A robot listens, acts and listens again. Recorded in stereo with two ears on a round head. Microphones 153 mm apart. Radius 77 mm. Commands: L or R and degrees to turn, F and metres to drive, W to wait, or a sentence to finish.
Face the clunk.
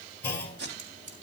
L30
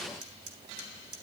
W
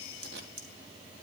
I heard a clunk, but can't make it out now. It was about 20° right or 140° left.